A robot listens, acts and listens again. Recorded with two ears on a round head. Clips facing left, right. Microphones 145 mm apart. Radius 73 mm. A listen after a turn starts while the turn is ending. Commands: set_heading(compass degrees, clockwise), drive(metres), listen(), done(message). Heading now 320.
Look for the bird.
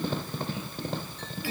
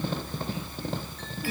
listen()
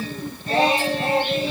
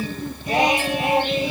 listen()
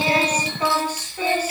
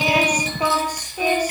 done("I can't make out a bird to turn to.")